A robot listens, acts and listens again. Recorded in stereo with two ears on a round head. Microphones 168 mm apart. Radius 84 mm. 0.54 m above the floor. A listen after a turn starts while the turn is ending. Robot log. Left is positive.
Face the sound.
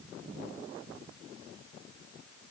cmd idle
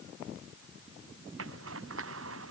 cmd yaw -90
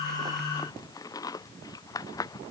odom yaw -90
note: So it is at 20° left.
cmd yaw +20
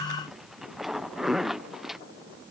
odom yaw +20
end: Found it: a zipper, straight ahead.